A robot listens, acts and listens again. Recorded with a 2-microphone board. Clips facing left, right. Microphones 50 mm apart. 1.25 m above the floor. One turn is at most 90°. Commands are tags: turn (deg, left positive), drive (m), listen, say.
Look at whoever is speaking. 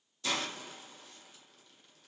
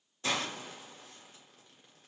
<listen/>
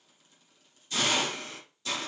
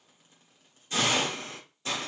<listen/>
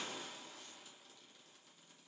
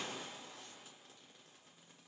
<say>I can't make out anyone speaking, only a hiss.</say>